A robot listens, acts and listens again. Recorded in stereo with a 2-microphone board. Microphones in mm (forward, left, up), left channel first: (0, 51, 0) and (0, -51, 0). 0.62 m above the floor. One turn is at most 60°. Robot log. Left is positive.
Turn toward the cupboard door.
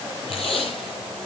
cmd idle
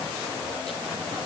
cmd idle
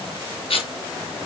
end: I can't make out a cupboard door, only tape being pulled.